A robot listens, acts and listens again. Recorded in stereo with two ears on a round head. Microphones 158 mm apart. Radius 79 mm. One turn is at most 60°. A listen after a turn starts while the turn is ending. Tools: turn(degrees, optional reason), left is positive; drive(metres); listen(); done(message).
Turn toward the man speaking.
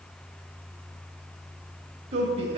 turn(degrees=-35, reason="The man speaking: about 35° right or 145° right.")
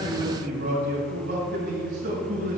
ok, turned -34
turn(degrees=-60, reason="So it is at 125° right.")
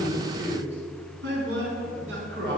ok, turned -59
turn(degrees=-60, reason="The man speaking is now 70° right.")
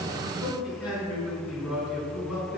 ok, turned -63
done("Found it: a man speaking, straight ahead.")